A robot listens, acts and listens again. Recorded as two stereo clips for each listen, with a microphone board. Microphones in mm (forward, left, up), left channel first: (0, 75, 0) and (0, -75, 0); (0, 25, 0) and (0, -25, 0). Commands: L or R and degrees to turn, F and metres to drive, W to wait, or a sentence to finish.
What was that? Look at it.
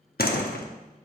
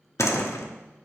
L90
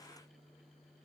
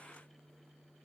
Facing where the door slam came from. I can't hear it now.